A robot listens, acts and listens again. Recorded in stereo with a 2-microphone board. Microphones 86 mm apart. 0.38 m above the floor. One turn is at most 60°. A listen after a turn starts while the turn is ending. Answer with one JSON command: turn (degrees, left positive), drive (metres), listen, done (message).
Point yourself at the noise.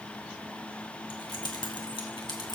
{"turn": 60}
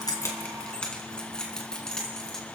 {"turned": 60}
{"done": "Found it: keys jangling, straight ahead."}